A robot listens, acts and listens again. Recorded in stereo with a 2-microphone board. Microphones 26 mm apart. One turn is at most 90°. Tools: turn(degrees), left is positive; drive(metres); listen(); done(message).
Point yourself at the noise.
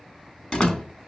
turn(degrees=40)
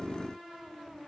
listen()
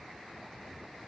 done("I heard a door slam, but can't make it out now. It was about straight ahead or 100° left.")